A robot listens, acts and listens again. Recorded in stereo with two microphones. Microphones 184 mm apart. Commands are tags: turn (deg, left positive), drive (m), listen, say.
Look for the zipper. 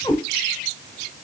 <listen/>
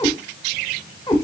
<listen/>
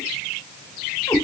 <say>I can't make out a zipper to turn to.</say>